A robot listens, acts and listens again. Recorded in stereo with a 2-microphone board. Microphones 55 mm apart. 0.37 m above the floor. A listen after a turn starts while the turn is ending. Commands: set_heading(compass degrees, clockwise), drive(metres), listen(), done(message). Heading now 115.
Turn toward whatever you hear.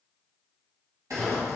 set_heading(205)
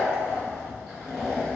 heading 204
done("Facing the zipper, under 1 m away.")